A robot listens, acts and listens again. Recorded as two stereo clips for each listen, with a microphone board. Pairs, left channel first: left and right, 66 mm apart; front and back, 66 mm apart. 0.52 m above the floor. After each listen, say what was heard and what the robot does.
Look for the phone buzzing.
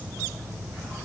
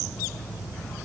Keep listening.
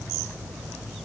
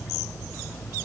Keep listening.
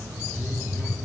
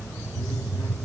The phone buzzing: 30° left. Turn 30° left.
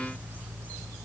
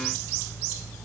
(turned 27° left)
Keep listening.
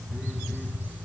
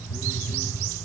Facing the phone buzzing.